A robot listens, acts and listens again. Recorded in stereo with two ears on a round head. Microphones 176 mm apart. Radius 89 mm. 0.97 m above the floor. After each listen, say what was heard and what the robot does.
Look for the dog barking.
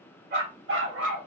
The dog barking: about 70° right or 110° right. Turn 70° right.
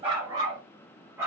So it is at 10° right. Turn 10° right.
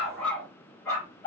The dog barking is now 15° left. Turn 15° left.
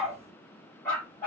The dog barking is now 10° left. Turn 10° left.
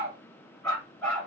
Facing the dog barking.